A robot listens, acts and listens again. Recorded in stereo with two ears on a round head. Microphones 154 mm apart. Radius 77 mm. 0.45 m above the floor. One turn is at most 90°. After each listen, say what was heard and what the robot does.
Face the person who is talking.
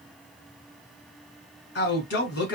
The man speaking: about 70° left or 110° left. Turn 70° left.
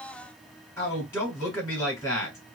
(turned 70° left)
So it is at 20° left. Turn 20° left.
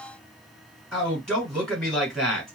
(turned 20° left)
Found it: a man speaking, straight ahead, 2 to 4 m away.